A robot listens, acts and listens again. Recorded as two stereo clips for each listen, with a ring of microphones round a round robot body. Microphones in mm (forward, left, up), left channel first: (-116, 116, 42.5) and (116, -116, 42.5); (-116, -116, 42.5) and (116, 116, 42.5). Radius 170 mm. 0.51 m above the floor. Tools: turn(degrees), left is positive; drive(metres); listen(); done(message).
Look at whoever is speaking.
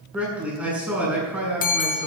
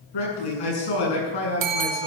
turn(degrees=-130)
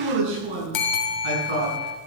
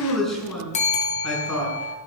turn(degrees=-45)
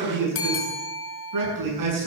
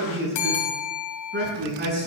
turn(degrees=-15)
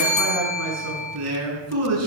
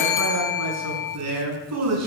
done("Facing the man speaking, over 4 m away.")